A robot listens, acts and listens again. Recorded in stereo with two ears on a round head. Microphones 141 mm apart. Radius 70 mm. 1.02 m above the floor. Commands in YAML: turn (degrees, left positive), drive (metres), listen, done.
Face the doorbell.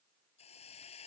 listen: true
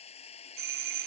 turn: -65
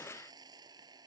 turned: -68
listen: true
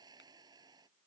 listen: true
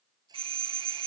turn: -35
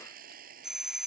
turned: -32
done: "Facing the doorbell."